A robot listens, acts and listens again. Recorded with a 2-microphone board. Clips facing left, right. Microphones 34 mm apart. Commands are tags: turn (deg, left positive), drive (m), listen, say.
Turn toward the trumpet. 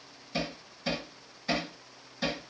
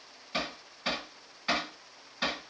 <listen/>
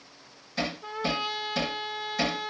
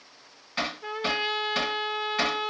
<turn deg="-25"/>
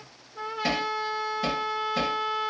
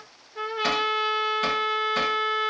<turn deg="-130"/>
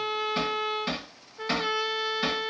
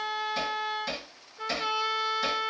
<turn deg="10"/>
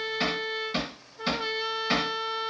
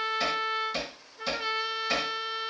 <say>Found it: a trumpet, straight ahead.</say>